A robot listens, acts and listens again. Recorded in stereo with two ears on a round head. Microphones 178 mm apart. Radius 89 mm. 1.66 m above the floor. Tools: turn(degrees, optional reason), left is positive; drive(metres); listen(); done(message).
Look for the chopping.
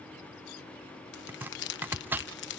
turn(degrees=-30)
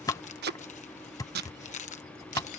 turn(degrees=15, reason="So it is at 15° left.")
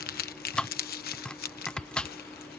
done("Found it: chopping, straight ahead.")